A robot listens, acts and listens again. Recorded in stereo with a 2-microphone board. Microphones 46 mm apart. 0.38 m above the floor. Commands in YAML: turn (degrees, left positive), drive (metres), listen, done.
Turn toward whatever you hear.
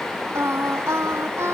turn: -90
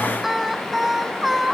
done: "Found it: singing, straight ahead."